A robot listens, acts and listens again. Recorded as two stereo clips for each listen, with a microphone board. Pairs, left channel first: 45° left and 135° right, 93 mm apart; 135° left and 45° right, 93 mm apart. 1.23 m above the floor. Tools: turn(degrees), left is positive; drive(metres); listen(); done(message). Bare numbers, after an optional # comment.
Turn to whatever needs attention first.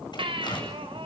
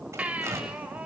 # The baby crying: 120° right.
turn(-120)
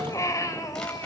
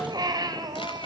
done("Facing the baby crying, 2 to 4 m away.")